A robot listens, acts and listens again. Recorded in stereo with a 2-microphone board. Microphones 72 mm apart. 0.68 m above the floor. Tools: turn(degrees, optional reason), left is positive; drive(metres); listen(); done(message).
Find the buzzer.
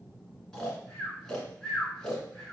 listen()
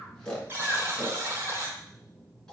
turn(degrees=-35, reason="The buzzer: about 35° right or 145° right.")
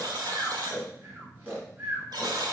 turn(degrees=-110, reason="So it is at 110° right.")
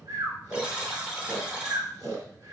turn(degrees=-15, reason="The buzzer is now 15° right.")
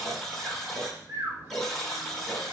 done("Found it: a buzzer, straight ahead, 1 to 2 m away.")